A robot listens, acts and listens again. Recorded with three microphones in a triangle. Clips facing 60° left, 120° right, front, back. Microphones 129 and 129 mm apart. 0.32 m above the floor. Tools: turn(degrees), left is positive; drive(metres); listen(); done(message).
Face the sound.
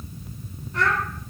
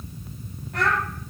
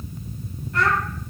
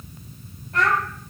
turn(degrees=-140)
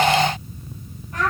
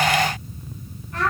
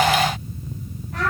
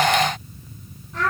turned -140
turn(degrees=-15)
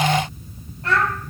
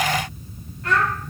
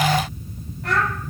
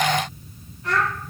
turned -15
done("Found it: a child speaking, straight ahead.")